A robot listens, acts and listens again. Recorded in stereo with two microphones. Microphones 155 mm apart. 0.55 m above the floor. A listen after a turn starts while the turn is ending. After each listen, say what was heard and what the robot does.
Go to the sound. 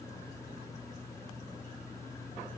Keep listening.
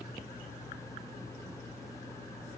Keep listening.
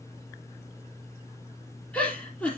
Turn 30° left.
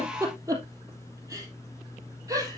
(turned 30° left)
So it is at 20° right. Turn 20° right.
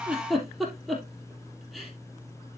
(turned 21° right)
Drive 1.0 m forward.
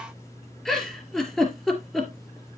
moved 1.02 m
Drive 1.0 m forward.
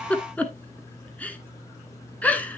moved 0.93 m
The giggle is now 10° left. Turn 10° left.
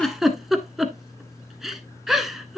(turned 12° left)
Drive 1.0 m forward.
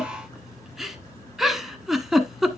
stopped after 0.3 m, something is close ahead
I am next to the giggle.